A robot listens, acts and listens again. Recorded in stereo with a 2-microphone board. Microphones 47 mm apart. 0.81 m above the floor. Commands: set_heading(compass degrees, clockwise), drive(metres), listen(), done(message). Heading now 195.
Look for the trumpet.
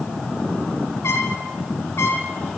set_heading(125)
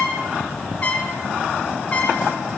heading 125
set_heading(95)
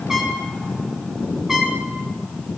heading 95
set_heading(105)
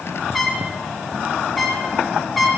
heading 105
done("Found it: a trumpet, straight ahead.")